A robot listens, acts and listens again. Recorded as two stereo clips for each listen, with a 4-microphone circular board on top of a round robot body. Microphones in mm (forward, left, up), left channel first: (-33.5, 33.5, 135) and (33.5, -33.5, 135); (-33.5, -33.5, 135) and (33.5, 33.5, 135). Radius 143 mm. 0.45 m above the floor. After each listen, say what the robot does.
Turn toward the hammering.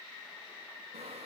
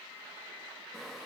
Keep listening.
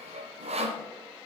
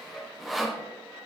Keep listening.
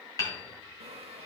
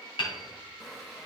Turn 170° right.
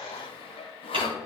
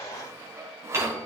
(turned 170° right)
Turn 15° right.
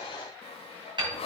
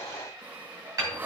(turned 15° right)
Turn 10° right.
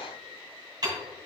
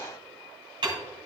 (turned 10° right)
Facing the hammering.